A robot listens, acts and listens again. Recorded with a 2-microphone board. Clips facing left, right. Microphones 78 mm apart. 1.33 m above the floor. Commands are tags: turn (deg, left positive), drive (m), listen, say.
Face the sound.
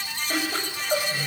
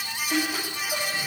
<turn deg="50"/>
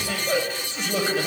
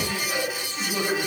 <turn deg="75"/>
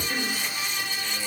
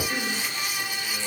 <turn deg="10"/>
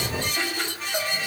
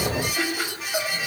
<say>Found it: laughter, straight ahead, over 4 m away.</say>